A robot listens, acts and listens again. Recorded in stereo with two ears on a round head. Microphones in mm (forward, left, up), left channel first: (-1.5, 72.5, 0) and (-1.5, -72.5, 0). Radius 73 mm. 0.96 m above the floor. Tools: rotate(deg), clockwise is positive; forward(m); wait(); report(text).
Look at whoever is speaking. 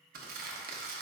wait()
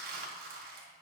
wait()
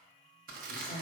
rotate(-50)
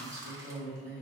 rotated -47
report("Facing the woman speaking, 1 to 2 m away.")